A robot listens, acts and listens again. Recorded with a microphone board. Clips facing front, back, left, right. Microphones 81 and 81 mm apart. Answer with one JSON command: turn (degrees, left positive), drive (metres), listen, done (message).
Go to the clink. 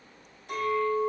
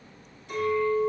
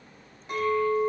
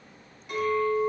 {"turn": 35}
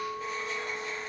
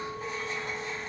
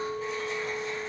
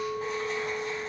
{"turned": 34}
{"drive": 1.0}
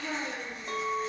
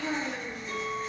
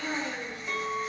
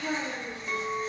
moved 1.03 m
{"drive": 1.0}
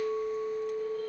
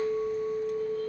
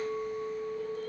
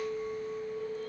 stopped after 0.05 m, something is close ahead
{"done": "Arrived at the clink, straight ahead."}